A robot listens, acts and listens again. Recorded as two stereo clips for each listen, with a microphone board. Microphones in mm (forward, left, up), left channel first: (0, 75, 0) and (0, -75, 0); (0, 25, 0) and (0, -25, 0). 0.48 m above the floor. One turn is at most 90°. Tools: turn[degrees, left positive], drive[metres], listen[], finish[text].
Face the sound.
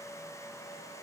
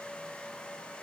Action: listen[]
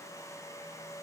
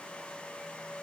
Action: listen[]
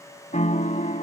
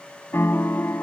Thought: The piano: about 60° left or 120° left.
Action: turn[60]
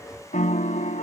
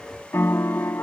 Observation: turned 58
Thought: So it is at 60° left.
Action: turn[60]
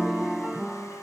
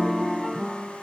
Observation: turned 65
Action: finish[Facing the piano.]